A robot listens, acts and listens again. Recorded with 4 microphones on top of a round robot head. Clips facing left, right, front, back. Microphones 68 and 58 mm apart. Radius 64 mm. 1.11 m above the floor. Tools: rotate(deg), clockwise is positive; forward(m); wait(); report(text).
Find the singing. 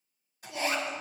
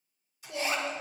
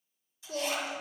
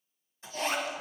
rotate(-10)
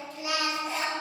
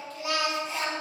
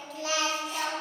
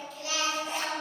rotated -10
report("Facing the singing.")